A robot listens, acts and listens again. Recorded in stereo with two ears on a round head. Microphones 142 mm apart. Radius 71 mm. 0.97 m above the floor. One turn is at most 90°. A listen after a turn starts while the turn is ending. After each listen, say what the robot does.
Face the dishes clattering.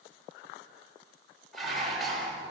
Turn 30° left.
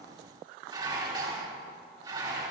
Turn 30° right.
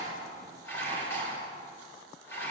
Turn 15° left.
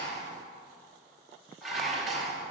Facing the dishes clattering, over 4 m away.